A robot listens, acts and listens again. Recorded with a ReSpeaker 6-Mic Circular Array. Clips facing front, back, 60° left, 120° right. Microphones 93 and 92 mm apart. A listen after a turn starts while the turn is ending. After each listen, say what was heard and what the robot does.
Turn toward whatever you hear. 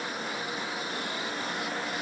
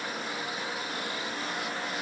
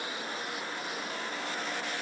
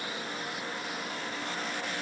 Keep listening.
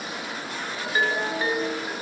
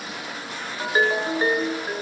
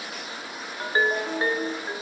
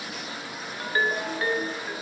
The ringtone: 125° left. Turn 125° left.
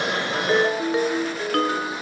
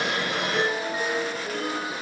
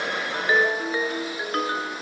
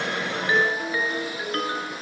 Found it: a ringtone, straight ahead, 2 to 4 m away.